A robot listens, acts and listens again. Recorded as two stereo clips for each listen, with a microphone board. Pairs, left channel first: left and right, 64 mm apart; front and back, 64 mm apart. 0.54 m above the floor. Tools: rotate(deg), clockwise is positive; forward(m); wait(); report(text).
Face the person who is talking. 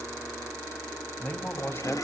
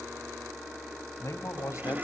rotate(-35)
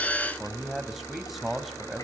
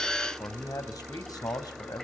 report("Found it: a man speaking, straight ahead, 2 to 4 m away.")